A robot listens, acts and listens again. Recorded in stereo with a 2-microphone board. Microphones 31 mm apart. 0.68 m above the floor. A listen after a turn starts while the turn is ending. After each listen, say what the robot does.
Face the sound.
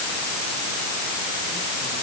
Keep listening.
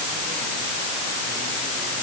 Keep listening.
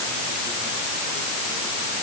I can't make out anything.